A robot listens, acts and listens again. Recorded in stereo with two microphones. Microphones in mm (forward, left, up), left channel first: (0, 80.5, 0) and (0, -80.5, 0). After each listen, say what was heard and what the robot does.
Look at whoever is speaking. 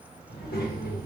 Turn 90° left.
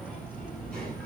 Facing the child speaking.